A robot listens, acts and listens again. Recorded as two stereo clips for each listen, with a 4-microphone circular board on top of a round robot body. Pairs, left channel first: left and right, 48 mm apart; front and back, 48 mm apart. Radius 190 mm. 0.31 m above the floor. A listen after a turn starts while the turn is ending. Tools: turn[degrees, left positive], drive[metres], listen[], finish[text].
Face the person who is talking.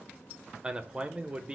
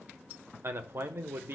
Thought: The man speaking: 155° right.
Action: turn[-155]
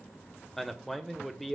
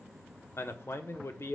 Action: finish[Facing the man speaking, 1 to 2 m away.]